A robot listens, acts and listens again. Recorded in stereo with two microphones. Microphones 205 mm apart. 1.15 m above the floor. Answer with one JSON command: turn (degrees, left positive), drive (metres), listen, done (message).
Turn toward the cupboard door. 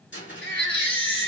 {"turn": 70}
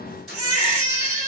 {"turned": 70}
{"done": "Facing the cupboard door."}